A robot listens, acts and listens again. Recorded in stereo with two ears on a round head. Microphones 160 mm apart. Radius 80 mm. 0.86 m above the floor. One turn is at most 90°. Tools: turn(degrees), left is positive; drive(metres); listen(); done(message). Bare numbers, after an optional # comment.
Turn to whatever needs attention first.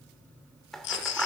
# The baby crying: about 70° left or 110° left.
turn(70)
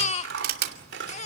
# So it is at 40° left.
turn(40)
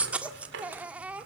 done("Found it: a baby crying, straight ahead, 1 to 2 m away.")